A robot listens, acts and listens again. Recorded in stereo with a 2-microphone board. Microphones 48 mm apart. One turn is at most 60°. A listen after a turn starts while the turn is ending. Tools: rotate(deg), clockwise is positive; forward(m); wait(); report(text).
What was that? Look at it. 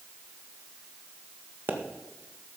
rotate(40)
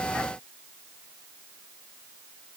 wait()
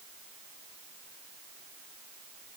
report("I heard a pop, but can't make it out now. It was about straight ahead or 100° right.")